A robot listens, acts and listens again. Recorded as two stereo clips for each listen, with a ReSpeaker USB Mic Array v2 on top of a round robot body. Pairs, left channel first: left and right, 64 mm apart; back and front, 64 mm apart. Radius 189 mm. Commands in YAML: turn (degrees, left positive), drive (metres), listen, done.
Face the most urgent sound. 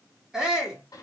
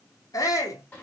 turn: -170
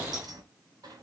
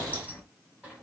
listen: true
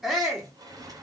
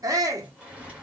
done: "Found it: a shout, straight ahead."